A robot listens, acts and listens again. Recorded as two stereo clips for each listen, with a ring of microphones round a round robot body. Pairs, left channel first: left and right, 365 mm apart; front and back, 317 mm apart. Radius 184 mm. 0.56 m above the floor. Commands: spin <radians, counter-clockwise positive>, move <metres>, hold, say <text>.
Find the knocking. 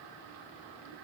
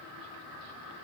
hold
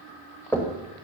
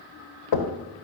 say Facing the knocking, 2 to 4 m away.